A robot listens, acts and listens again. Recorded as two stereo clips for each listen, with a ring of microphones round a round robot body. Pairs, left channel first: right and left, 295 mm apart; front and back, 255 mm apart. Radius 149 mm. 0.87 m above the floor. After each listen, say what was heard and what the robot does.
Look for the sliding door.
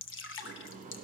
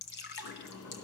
The sliding door: 25° left. Turn 25° left.
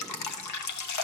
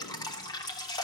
Keep listening.
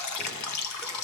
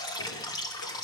Keep listening.
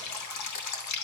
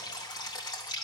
Facing where the sliding door came from. I can't hear it now.